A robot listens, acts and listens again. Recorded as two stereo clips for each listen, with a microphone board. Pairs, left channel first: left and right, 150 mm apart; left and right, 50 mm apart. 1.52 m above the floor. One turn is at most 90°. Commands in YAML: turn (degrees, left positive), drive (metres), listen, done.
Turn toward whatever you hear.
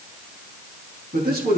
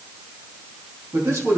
turn: -90
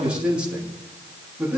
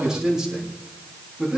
done: "Facing the man speaking, 2 to 4 m away."